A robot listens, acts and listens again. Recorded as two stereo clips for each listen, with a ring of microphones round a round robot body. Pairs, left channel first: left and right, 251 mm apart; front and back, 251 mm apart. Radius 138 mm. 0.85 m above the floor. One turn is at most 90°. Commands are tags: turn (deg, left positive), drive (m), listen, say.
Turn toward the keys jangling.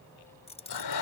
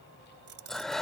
<turn deg="90"/>
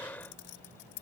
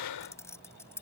<turn deg="80"/>
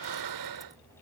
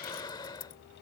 <listen/>
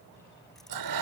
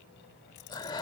<listen/>
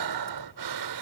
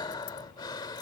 <say>Facing where the keys jangling came from. I can't hear it now.</say>